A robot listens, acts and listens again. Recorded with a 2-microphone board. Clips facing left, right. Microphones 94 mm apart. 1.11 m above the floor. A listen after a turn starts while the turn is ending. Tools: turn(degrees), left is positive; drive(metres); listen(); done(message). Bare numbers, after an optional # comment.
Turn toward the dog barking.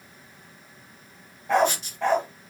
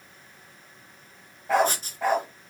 turn(-30)
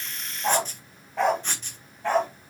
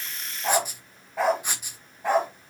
turn(-30)
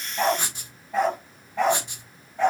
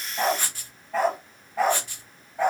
turn(-30)
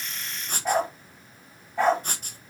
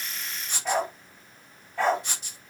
# So it is at 15° left.
turn(15)
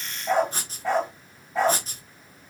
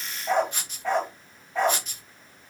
done("Found it: a dog barking, straight ahead.")